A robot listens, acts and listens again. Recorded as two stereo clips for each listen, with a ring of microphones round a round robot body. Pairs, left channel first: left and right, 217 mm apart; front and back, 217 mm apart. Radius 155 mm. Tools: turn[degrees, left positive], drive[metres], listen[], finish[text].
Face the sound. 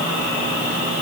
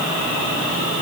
Action: listen[]
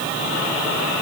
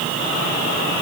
Action: listen[]
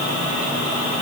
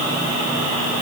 Action: finish[I can't make out anything.]